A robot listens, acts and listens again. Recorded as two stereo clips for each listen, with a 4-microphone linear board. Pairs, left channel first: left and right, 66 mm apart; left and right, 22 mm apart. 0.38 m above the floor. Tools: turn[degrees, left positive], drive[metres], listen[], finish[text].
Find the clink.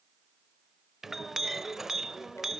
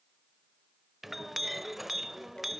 Action: turn[-30]
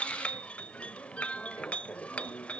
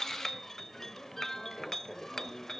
Thought: So it is at 25° left.
Action: turn[25]
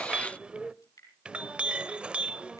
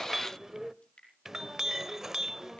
Thought: The clink is now 20° right.
Action: turn[-20]
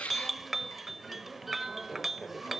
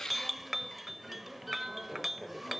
Action: finish[Found it: a clink, straight ahead.]